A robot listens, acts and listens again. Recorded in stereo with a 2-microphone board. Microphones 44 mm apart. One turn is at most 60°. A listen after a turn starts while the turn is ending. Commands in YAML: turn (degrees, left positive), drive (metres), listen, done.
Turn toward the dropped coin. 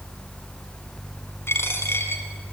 turn: 60
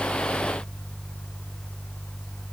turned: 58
turn: 30
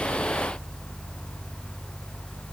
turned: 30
done: "I heard a dropped coin from this way, but can't make it out now."